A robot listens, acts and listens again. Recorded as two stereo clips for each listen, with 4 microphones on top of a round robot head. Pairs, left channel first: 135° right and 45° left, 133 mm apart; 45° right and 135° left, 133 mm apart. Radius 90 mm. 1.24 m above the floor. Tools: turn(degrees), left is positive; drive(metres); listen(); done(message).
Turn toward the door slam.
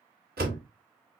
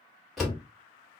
turn(degrees=45)
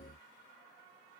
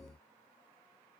done("I heard a door slam from this way, but can't make it out now.")